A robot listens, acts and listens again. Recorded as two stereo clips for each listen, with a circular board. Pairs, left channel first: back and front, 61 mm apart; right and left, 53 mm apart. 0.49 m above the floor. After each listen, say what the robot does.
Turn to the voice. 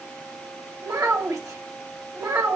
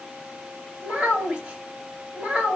Turn 20° left.
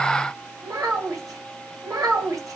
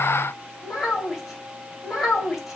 Found it: a child speaking, straight ahead.